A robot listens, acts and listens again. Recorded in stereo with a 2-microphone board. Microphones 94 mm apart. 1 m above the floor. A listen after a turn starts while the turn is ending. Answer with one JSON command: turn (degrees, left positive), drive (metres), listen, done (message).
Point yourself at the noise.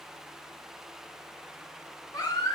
{"turn": 50}
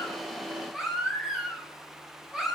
{"done": "Facing the baby crying, 2 to 4 m away."}